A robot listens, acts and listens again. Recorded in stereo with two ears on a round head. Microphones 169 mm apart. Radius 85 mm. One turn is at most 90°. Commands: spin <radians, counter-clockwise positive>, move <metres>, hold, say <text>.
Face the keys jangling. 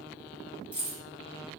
spin -0.52
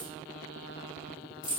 spin 0.44
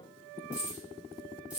say Facing the keys jangling, 1 to 2 m away.